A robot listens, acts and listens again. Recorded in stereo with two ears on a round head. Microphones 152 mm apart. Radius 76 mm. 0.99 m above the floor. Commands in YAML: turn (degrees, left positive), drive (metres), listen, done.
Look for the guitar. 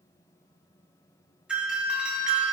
listen: true
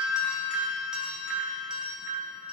listen: true
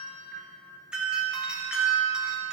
done: "I can't make out a guitar to turn to."